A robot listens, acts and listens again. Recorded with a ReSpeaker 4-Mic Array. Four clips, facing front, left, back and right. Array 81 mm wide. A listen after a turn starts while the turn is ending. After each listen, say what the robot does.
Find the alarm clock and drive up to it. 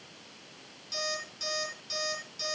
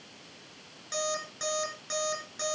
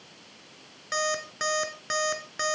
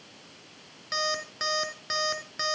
Turn 160° right.
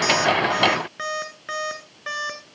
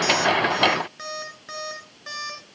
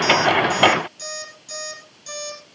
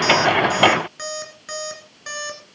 Turn 10° right.
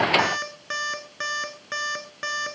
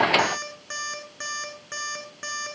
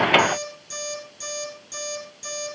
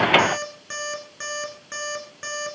Drive 1.0 m forward.
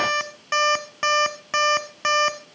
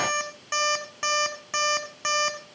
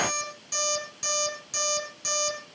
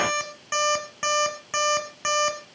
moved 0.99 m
Drive 1.0 m forward.
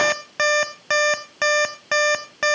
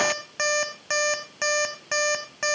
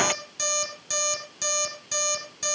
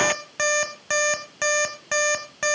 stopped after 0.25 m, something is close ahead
Arrived at the alarm clock, straight ahead.